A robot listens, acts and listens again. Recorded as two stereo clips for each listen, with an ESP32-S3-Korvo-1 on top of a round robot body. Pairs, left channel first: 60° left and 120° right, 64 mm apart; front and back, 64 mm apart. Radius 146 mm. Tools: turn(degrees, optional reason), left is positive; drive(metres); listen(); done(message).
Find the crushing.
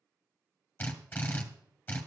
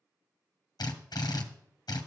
listen()
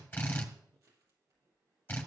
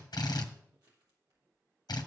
turn(degrees=-160, reason="The crushing: 160° right.")
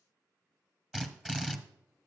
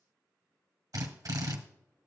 listen()
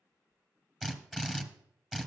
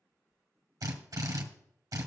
turn(degrees=-10, reason="The crushing is now 10° right.")
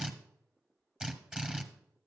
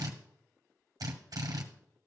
done("Facing the crushing.")